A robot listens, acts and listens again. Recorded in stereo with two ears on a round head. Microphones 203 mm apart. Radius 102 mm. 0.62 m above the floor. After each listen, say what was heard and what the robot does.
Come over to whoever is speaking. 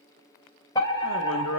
The man speaking: about 60° left or 120° left. Turn 60° left.
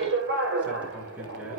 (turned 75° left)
Drive 1.0 m forward.
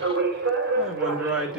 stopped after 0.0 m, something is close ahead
Something is in my way. I am facing the man speaking but have not reached it.